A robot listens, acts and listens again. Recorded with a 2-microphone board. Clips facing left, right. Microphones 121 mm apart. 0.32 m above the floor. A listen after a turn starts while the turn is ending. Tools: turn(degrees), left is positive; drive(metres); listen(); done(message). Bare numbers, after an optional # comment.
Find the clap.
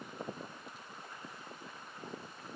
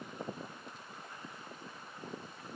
listen()
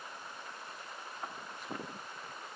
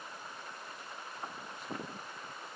listen()
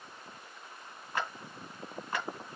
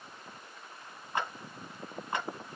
# The clap: about 20° right or 160° right.
turn(-20)
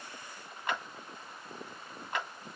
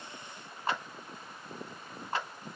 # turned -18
# So it is at 145° right.
turn(-145)
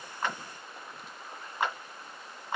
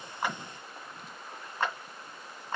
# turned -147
# The clap is now 15° left.
turn(15)
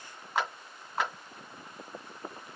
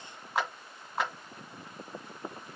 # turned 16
done("Facing the clap.")